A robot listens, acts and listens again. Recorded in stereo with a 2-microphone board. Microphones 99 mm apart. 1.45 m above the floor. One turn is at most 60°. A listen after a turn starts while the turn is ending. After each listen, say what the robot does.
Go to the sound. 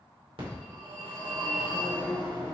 Turn 60° right.
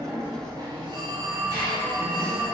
Turn 45° right.
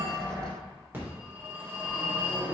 Turn 20° right.
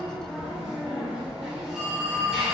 Drive 1.0 m forward.
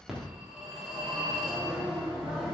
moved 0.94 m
Drive 1.0 m forward.
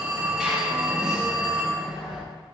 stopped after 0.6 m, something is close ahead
Turn 10° right.
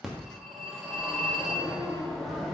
I am next to the phone ringing.